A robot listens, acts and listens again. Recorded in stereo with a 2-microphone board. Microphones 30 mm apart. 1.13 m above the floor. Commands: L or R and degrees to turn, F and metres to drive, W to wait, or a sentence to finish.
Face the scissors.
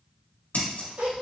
L90
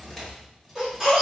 W
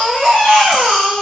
W
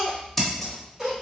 L10
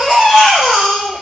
W
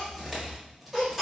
W
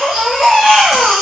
I heard scissors from this way, but can't make it out now.